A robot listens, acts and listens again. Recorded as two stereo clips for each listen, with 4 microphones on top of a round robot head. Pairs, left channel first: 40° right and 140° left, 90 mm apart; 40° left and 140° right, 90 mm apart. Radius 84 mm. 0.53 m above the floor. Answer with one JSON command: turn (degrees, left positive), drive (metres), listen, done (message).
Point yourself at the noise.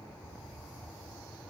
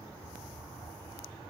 {"listen": true}
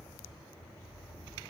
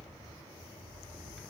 {"listen": true}
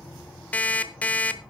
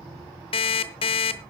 {"turn": 30}
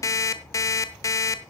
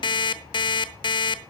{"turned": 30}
{"turn": 10}
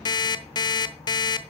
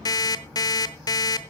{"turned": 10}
{"done": "Found it: an alarm clock, straight ahead, under 1 m away."}